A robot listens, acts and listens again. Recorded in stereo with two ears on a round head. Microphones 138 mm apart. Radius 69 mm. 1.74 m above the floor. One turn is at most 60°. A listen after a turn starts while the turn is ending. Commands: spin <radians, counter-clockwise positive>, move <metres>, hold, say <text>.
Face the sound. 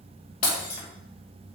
spin 1.05
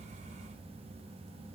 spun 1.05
hold
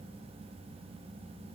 say I heard breaking glass, but can't make it out now. It was about straight ahead or 60° left.